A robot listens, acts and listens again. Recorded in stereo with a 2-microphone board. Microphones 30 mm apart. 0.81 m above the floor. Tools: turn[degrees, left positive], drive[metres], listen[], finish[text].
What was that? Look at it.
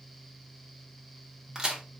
Thought: The crack: about 20° right or 160° right.
Action: turn[-20]
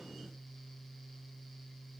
Action: listen[]
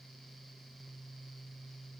Action: finish[I heard a crack, but can't make it out now. It was about straight ahead or 140° right.]